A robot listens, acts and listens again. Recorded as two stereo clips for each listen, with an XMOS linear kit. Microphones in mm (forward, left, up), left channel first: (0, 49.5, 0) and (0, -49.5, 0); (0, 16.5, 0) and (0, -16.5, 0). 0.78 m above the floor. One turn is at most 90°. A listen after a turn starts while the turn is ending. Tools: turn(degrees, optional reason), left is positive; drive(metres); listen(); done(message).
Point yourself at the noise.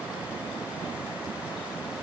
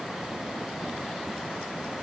listen()
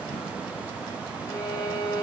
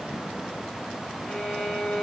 turn(degrees=40, reason="The violin: about 40° left or 140° left.")
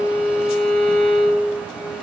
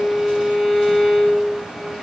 turn(degrees=10, reason="So it is at 10° left.")
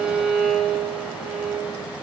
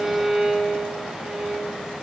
done("Found it: a violin, straight ahead.")